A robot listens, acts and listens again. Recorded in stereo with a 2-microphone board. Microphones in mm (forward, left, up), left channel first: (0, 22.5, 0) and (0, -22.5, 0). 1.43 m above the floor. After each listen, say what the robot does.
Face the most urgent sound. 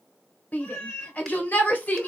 Turn 35° left.
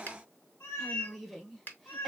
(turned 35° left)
Found it: a shout, straight ahead.